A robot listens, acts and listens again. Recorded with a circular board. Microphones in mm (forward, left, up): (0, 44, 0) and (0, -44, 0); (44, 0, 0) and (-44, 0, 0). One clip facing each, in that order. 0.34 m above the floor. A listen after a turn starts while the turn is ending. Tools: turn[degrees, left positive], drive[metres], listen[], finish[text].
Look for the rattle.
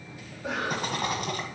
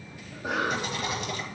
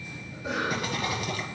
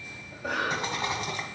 Thought: The rattle: 125° left.
Action: turn[125]
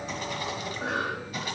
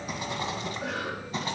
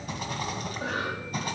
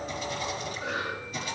Thought: The rattle is now 35° right.
Action: turn[-35]
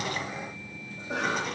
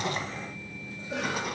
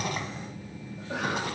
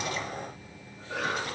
Action: listen[]
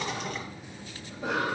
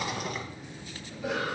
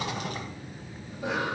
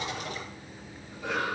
Action: finish[Facing the rattle.]